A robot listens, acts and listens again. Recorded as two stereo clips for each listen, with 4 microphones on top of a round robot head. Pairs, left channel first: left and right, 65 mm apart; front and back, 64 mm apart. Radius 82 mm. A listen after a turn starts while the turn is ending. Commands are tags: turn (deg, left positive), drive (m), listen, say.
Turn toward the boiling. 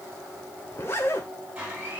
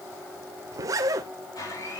<listen/>
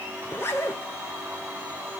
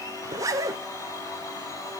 <listen/>
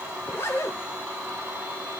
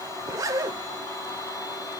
<say>I can't make out boiling, only a zipper and a blender.</say>